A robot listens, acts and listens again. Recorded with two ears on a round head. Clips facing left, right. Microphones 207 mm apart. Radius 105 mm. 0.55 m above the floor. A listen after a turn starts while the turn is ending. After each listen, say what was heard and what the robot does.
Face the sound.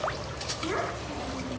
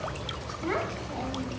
Turn 90° right.
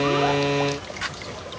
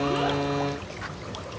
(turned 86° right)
Keep listening.
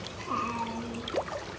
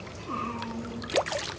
The child speaking is now 25° right. Turn 25° right.
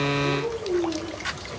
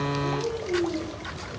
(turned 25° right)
Found it: a child speaking, straight ahead, over 4 m away.